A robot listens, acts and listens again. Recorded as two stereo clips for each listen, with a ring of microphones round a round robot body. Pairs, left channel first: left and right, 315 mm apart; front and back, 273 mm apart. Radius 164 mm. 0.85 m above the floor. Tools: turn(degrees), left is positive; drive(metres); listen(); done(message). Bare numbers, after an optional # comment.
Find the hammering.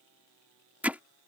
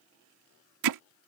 # The hammering: 175° right.
turn(-175)
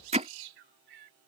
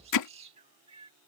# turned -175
# The hammering is now 20° right.
turn(-20)
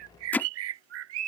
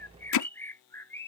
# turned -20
done("Found it: hammering, straight ahead.")